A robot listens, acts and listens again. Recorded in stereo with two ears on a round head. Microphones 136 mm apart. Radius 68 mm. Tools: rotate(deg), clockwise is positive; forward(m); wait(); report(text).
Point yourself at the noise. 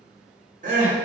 rotate(55)
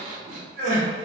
rotate(65)
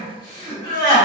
rotate(-35)
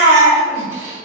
rotate(15)
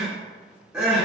report("Facing the crying.")